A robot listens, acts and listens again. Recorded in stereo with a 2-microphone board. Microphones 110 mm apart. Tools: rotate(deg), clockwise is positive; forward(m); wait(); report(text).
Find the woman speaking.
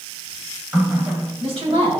rotate(60)
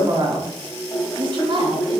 rotate(55)
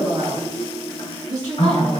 rotate(35)
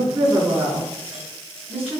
rotate(15)
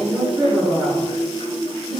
report("Facing the woman speaking, over 4 m away.")